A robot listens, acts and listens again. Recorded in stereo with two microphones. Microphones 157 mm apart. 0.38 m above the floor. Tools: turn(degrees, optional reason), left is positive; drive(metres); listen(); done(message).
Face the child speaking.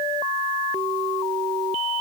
listen()
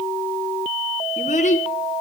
turn(degrees=55, reason="The child speaking: about 55° left or 125° left.")
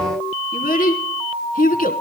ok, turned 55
turn(degrees=70, reason="So it is at 70° left.")
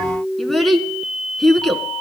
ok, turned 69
done("Facing the child speaking.")